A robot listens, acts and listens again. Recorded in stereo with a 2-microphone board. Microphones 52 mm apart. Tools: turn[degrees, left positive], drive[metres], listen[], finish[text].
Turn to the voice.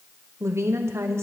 Thought: The woman speaking: about 60° right or 120° right.
Action: turn[-60]
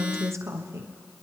Thought: So it is at 60° right.
Action: turn[-60]
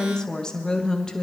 Thought: The woman speaking is now 15° left.
Action: turn[15]
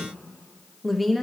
Action: finish[Found it: a woman speaking, straight ahead.]